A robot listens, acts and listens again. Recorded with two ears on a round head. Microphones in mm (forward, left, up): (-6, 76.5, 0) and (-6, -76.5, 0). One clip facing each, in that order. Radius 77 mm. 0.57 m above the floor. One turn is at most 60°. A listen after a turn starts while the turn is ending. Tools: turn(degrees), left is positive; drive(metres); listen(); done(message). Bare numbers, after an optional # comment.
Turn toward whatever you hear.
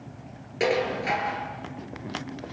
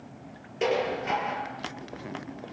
turn(60)
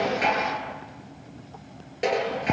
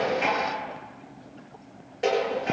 # So it is at 25° left.
turn(25)
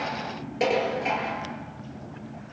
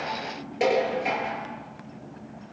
done("Facing the dishes clattering, over 4 m away.")